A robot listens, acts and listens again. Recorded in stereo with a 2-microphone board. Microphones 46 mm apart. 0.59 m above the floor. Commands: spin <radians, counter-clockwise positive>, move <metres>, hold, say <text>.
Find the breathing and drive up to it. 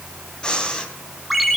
spin 0.35
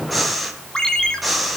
move 1.0
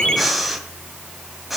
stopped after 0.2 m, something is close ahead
say Blocked. The breathing is further on, straight ahead.